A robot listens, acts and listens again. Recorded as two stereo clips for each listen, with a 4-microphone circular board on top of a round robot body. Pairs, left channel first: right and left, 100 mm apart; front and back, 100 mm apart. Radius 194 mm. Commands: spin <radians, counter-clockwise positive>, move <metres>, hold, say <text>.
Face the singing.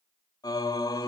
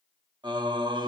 spin -2.44
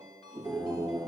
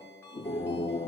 say Facing the singing.